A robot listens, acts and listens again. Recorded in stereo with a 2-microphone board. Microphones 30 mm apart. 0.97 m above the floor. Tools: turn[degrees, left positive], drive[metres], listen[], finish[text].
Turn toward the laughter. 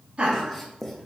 Thought: The laughter: about 35° right or 145° right.
Action: turn[-35]
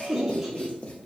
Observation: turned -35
Action: finish[Facing the laughter.]